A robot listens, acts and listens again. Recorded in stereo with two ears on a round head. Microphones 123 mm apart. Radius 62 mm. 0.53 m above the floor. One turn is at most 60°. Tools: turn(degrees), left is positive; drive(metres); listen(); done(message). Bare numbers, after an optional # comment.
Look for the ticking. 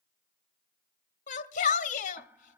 # The ticking: about 15° right or 165° right.
turn(-15)
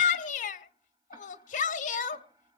listen()
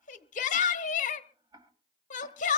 # So it is at 150° right.
turn(-60)
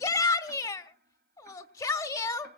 # Nothing new. It was at 90° right.
turn(-60)
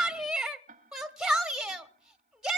# The ticking is now 55° right.
turn(-55)
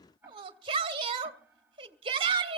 # The ticking is now 15° right.
turn(-15)
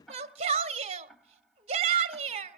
done("Facing the ticking.")